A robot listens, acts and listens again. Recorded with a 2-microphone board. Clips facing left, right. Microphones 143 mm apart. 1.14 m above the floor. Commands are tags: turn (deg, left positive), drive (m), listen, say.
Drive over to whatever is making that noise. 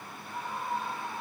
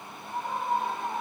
<turn deg="-60"/>
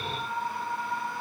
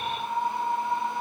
<turn deg="-60"/>
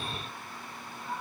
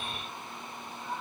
<drive m="1.0"/>
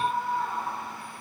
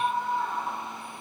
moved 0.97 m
<drive m="1.0"/>
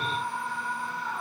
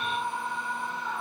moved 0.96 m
<drive m="1.0"/>
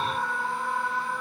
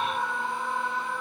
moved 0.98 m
<drive m="1.0"/>
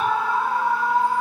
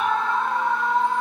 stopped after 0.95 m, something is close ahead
<turn deg="10"/>
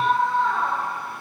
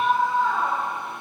<say>Arrived at the scream, straight ahead.</say>